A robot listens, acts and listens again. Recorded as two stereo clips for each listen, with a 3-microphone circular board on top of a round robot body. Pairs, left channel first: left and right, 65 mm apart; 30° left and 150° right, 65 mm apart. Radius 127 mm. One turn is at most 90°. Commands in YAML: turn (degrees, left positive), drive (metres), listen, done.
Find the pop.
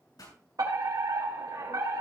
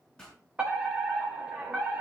turn: 90
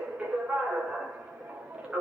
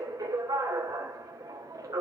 turn: 15
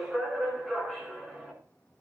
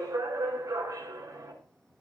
done: "I heard a pop from this way, but can't make it out now."